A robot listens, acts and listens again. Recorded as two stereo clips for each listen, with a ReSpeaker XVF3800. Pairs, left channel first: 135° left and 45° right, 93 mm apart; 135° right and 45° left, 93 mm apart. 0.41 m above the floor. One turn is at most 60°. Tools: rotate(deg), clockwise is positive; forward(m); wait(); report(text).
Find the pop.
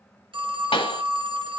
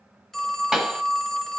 rotate(-60)
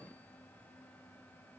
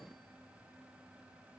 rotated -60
rotate(-60)
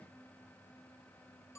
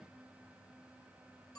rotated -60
rotate(-15)
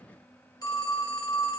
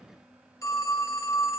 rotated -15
report("Facing where the pop came from. I can't hear it now.")